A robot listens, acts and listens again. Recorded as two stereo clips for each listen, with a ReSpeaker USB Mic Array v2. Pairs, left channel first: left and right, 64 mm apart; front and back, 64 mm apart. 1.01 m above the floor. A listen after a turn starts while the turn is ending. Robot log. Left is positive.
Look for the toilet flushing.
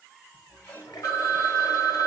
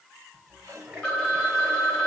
note: The toilet flushing: 110° left.
cmd yaw +110
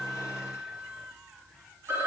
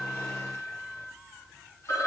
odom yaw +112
cmd idle
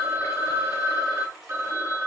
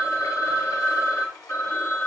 end: Found it: a toilet flushing, straight ahead, over 4 m away.